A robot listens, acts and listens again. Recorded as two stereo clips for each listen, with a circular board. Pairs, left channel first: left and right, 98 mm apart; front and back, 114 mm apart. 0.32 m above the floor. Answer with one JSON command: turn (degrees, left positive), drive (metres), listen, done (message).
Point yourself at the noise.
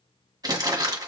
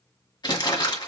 {"turn": -45}
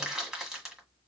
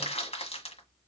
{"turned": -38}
{"done": "Found it: crumpling, straight ahead."}